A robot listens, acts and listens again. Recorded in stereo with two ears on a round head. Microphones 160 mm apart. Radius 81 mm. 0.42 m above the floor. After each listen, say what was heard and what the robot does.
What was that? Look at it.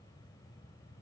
Keep listening.
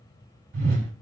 Turn 90° right.
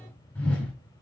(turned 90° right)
So it is at 10° left. Turn 10° left.
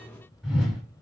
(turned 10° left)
Facing the whoosh.